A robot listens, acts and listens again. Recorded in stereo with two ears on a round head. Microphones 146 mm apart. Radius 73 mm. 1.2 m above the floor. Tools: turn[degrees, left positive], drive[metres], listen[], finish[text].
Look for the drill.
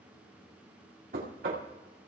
Action: listen[]
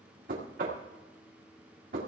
Action: listen[]
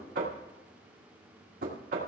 Action: finish[I can't make out a drill, only knocking.]